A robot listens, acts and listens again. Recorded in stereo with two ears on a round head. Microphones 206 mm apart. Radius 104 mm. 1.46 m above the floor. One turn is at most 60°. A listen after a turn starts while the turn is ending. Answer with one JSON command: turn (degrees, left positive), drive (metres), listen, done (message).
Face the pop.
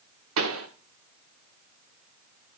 {"turn": -60}
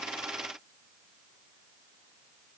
{"listen": true}
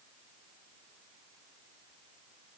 {"done": "I heard a pop, but can't make it out now. It was about 10° right or 50° right."}